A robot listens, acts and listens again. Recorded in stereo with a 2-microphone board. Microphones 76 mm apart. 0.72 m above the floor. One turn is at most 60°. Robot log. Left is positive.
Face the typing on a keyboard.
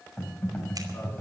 note: The typing on a keyboard: about 20° left or 160° left.
cmd yaw +20
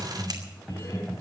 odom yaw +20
end: Facing the typing on a keyboard, over 4 m away.